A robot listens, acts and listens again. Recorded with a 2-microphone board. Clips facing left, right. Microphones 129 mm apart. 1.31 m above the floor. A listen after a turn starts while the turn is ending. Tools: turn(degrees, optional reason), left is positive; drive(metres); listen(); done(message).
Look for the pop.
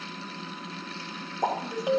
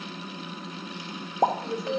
turn(degrees=-55, reason="The pop: about 55° right or 125° right.")
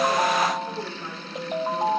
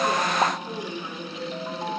listen()
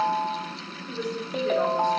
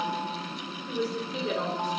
done("I heard a pop, but can't make it out now. It was about straight ahead or 70° right.")